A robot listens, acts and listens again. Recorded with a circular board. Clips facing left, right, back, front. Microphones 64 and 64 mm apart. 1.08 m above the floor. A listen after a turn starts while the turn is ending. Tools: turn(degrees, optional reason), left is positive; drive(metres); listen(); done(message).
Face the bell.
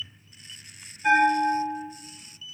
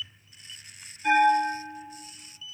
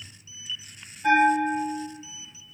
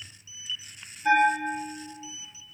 turn(degrees=165, reason="The bell: 165° left.")
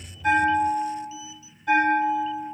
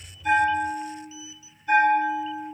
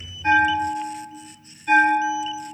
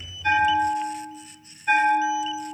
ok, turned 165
turn(degrees=70, reason="The bell is now 70° left.")
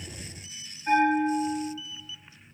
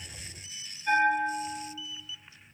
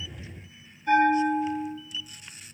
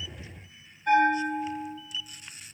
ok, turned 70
turn(degrees=20, reason="The bell is now 20° left.")
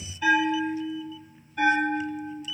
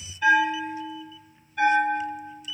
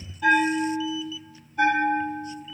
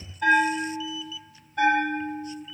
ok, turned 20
done("Facing the bell, 1 to 2 m away.")